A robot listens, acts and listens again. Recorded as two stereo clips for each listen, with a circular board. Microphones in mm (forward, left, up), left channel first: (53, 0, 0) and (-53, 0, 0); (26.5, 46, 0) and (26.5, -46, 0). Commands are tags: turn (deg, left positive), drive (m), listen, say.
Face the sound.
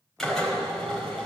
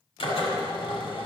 <turn deg="85"/>
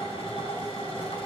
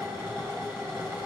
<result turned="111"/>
<turn deg="-25"/>
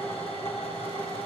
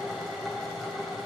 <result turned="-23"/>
<say>Found it: a drill, straight ahead, over 4 m away.</say>